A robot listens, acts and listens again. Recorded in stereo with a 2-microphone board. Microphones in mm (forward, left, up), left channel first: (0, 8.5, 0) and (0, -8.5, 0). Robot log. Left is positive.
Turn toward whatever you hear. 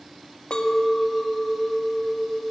note: The clink: about 65° left or 115° left.
cmd yaw +65
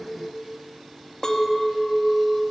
note: So it is at 35° left.
cmd yaw +35
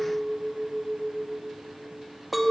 end: Facing the clink.